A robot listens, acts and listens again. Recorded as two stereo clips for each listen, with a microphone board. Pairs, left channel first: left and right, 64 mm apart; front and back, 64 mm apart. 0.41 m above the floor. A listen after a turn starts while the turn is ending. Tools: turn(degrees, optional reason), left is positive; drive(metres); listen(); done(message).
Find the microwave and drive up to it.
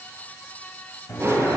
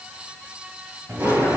turn(degrees=125, reason="The microwave: 125° left.")
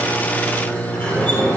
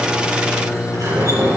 turn(degrees=60, reason="The microwave is now 60° left.")
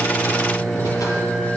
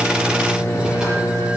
drive(metres=1.0)
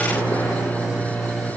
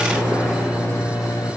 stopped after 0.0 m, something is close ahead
done("Something is in my way. I am facing the microwave but have not reached it.")